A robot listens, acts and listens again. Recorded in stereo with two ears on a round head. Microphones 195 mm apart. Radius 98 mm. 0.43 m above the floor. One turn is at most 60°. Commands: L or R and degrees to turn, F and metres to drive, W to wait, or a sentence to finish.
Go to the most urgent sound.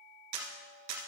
W
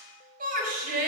R40
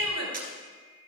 R60
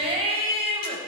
R30
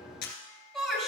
F1.0
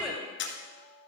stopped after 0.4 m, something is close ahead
Something is in my way. I am facing the shout but have not reached it.